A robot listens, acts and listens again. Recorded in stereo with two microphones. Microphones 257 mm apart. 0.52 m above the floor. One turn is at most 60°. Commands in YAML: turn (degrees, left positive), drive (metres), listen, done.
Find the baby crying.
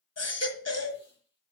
turn: 60
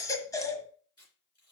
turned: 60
turn: 15
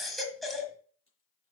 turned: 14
done: "Found it: a baby crying, straight ahead, 1 to 2 m away."